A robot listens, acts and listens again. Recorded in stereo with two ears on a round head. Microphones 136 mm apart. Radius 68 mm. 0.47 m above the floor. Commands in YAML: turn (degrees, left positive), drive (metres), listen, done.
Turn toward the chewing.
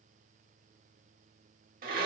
listen: true
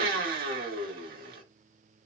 listen: true
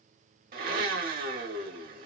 done: "I can't make out chewing to turn to."